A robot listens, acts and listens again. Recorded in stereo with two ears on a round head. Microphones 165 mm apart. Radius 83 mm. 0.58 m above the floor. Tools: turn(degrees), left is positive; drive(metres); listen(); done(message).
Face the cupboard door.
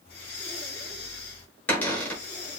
turn(degrees=30)
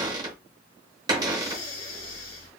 turn(degrees=-20)
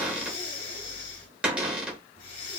done("Found it: a cupboard door, straight ahead.")